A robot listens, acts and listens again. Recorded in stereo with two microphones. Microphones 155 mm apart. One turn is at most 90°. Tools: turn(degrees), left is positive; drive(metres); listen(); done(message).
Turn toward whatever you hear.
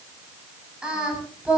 turn(degrees=-30)
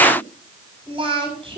turn(degrees=-90)
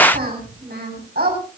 turn(degrees=-85)
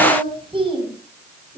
turn(degrees=-35)
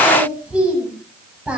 done("Facing the singing.")